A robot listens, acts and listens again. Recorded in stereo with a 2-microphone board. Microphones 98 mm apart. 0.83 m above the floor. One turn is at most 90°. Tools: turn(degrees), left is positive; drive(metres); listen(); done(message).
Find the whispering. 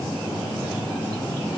listen()
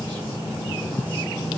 listen()
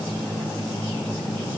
done("I can't make out whispering.")